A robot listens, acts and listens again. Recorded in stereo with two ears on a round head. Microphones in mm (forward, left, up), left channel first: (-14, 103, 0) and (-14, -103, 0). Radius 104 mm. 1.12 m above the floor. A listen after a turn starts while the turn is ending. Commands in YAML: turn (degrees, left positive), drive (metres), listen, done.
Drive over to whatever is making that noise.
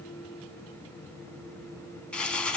turn: 30
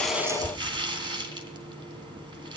turn: -20
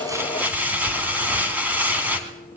turn: -10
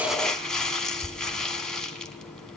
drive: 1.0
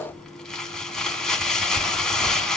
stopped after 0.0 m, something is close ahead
done: "Something is in my way. I am facing the crumpling but have not reached it."